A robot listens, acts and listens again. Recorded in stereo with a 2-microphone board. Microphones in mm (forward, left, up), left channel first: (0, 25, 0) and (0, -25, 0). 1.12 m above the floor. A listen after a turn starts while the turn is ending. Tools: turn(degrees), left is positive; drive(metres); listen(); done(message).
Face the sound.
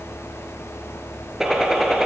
turn(degrees=-30)
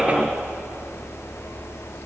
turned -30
listen()
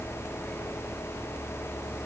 done("I heard a gunshot, but can't make it out now. It was about 20° left or 140° right.")